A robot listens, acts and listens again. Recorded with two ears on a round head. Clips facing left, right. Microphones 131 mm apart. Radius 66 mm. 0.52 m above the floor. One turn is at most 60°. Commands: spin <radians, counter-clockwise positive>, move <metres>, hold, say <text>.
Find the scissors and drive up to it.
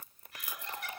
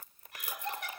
hold
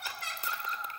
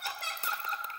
hold
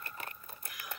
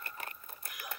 say I can't make out scissors to turn to.